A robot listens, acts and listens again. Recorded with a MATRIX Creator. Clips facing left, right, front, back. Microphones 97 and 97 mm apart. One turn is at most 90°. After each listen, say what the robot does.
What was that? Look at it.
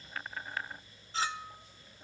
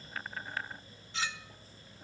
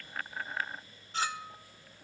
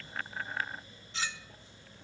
Turn 40° left.
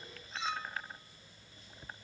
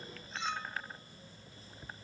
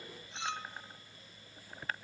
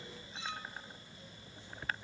Facing the clink.